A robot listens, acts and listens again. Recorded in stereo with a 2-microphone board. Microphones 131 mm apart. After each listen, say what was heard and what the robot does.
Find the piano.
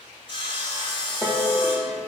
Turn 30° right.
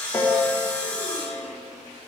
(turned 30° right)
So it is at 20° left. Turn 20° left.
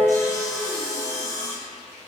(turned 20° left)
The piano is now 10° left. Turn 10° left.
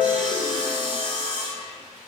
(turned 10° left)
Facing the piano, 1 to 2 m away.